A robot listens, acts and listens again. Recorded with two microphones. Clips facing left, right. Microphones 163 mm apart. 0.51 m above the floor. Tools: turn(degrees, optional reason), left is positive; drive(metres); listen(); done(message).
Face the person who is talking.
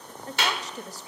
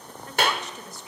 turn(degrees=35, reason="The woman speaking: about 35° left or 145° left.")
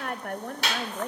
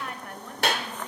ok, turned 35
turn(degrees=100, reason="So it is at 100° left.")
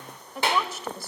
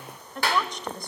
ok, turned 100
done("Found it: a woman speaking, straight ahead, 2 to 4 m away.")